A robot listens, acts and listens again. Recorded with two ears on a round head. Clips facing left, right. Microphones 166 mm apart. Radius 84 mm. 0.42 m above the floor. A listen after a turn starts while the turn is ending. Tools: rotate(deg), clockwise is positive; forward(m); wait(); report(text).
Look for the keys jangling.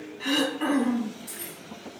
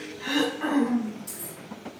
rotate(15)
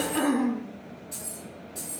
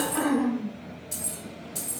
rotate(120)
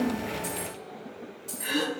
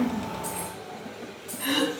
rotate(-20)
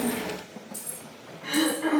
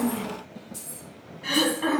rotate(-15)
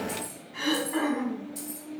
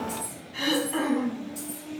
report("Facing the keys jangling, 1 to 2 m away.")